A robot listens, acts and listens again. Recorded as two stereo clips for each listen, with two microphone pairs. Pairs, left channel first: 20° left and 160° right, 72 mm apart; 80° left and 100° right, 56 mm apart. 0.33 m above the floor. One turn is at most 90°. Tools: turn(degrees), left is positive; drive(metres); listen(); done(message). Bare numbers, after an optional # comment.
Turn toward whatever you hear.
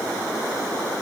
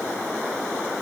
listen()
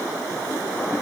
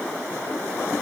listen()
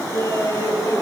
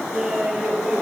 # The laughter: 20° right.
turn(-20)
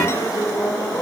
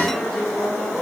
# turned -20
# The laughter is now 10° right.
turn(-10)
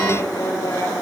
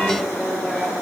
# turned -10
done("Facing the laughter.")